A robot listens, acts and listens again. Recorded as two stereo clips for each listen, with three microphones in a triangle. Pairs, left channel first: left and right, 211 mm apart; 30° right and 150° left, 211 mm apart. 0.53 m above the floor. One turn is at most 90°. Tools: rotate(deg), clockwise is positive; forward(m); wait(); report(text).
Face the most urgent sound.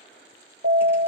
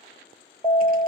rotate(90)
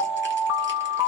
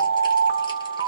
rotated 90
rotate(20)
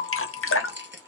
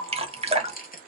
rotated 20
wait()
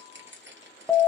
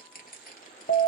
report("Found it: an alarm, straight ahead.")